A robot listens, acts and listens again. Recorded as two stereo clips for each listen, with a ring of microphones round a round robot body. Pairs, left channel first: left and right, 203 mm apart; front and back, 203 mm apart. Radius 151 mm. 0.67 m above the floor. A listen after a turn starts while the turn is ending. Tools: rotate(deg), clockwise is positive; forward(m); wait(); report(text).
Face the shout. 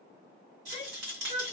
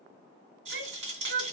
rotate(-150)
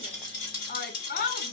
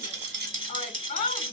rotate(-50)
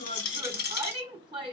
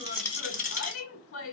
rotate(25)
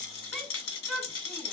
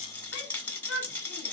report("Facing the shout.")